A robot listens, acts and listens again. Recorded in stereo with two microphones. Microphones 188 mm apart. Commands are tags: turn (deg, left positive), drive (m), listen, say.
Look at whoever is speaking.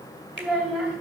<turn deg="-30"/>
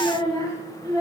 <turn deg="15"/>
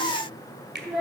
<say>Facing the child speaking.</say>